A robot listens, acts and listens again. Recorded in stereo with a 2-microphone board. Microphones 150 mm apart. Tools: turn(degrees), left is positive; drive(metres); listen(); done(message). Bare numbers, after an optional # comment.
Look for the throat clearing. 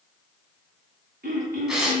turn(-90)
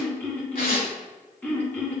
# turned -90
# So it is at 10° left.
turn(10)
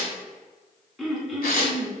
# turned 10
done("Found it: throat clearing, straight ahead.")